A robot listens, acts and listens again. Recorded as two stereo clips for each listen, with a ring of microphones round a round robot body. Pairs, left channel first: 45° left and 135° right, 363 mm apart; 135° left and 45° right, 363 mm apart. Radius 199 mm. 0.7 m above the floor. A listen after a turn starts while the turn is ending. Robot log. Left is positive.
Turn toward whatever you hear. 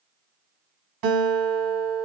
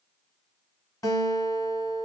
note: The guitar: 145° right.
cmd yaw -145
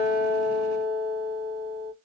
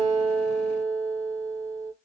end: Found it: a guitar, straight ahead, 1 to 2 m away.